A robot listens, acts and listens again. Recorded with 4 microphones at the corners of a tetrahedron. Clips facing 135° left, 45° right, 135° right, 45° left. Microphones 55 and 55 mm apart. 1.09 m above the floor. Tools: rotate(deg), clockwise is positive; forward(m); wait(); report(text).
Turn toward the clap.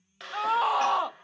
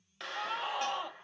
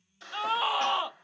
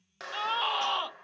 rotate(-45)
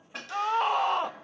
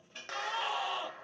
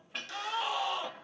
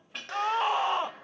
wait()
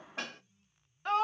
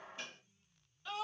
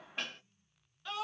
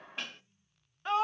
report("Found it: a clap, straight ahead, 2 to 4 m away.")